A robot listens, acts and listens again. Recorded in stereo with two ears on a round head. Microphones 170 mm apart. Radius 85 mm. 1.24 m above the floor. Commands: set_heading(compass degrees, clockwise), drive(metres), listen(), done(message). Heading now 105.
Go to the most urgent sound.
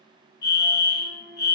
set_heading(45)
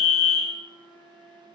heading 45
set_heading(10)
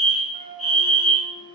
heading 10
drive(1.0)
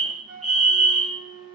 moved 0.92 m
drive(1.0)
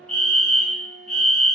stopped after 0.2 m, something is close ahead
done("Arrived at the fire alarm, straight ahead.")